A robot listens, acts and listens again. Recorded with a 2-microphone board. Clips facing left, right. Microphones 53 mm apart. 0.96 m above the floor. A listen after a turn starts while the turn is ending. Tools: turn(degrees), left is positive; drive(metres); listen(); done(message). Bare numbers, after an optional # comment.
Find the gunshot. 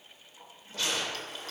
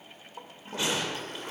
# The gunshot: about 20° right or 160° right.
turn(-20)
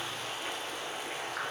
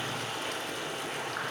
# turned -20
listen()
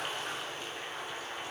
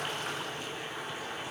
done("I heard a gunshot, but can't make it out now. It was about straight ahead or 140° right.")